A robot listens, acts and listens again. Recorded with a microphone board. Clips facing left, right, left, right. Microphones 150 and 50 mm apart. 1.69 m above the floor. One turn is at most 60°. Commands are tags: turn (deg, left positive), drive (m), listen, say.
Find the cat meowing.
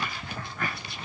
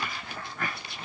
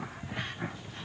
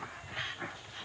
<listen/>
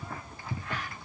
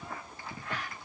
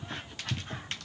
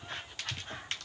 <listen/>
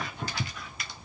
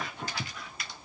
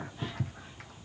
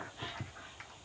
<say>I can't make out a cat meowing to turn to.</say>